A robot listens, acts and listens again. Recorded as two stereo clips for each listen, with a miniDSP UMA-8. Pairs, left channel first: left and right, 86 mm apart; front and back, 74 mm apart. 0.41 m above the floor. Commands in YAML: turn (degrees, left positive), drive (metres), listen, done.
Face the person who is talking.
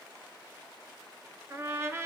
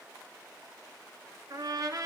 listen: true
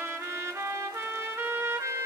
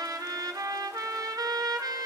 listen: true
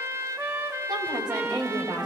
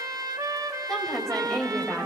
turn: -85
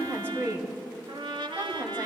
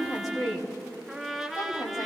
turn: -30
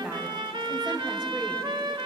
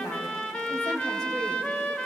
turn: -10
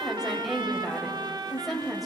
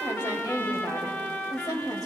done: "Found it: a woman speaking, straight ahead."